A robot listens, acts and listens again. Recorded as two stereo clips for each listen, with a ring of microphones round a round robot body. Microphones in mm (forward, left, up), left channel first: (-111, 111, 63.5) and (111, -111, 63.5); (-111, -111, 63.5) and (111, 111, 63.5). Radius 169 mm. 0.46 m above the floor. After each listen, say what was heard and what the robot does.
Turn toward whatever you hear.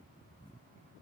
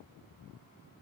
Keep listening.
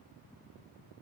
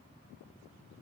Keep listening.
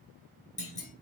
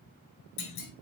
The clunk: 160° right. Turn 160° right.
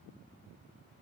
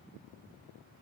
Facing where the clunk came from. I can't hear it now.